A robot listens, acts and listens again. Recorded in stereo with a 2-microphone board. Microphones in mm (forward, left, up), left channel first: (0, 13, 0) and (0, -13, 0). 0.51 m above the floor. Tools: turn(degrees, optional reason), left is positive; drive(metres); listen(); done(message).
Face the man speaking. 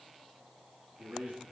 turn(degrees=-70, reason="The man speaking: about 70° right or 110° right.")
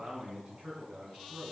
turn(degrees=-50, reason="So it is at 50° right.")
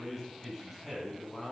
turn(degrees=-10, reason="The man speaking is now 10° right.")
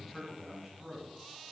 turn(degrees=-10, reason="The man speaking is now 10° right.")
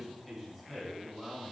done("Facing the man speaking.")